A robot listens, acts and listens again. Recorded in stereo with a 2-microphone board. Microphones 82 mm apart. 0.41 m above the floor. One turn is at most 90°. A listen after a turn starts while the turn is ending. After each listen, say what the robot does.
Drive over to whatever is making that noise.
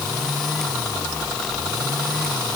Keep listening.
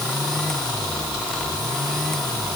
Keep listening.
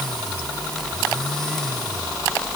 I can't make out anything to turn to.